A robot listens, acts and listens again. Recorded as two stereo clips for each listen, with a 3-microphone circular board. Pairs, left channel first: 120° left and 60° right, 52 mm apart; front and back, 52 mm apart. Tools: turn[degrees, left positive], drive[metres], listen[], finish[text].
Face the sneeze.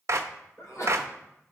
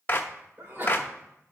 Thought: The sneeze: 130° left.
Action: turn[130]
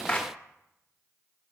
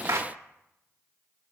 Action: finish[I heard a sneeze from this way, but can't make it out now.]